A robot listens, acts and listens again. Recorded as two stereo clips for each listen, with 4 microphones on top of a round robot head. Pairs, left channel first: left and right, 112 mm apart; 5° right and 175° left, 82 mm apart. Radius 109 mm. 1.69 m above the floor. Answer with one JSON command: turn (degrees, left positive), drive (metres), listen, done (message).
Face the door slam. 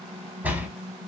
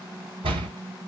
{"turn": -165}
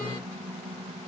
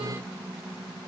{"done": "Facing where the door slam came from. I can't hear it now."}